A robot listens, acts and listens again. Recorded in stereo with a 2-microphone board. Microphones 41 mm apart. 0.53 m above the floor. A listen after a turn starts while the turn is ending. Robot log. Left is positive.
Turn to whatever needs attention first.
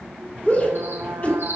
note: The shout: about 40° left or 140° left.
cmd yaw +40
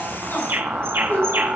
note: So it is at 95° left.
cmd yaw +95
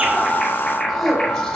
end: Facing the shout, 2 to 4 m away.